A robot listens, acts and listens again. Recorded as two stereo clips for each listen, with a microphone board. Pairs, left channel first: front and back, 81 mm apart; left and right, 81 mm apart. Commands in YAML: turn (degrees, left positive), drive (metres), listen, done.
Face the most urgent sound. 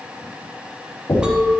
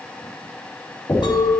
listen: true
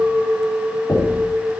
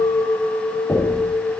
listen: true
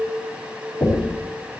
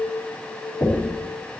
done: "I can't make out anything urgent to turn to."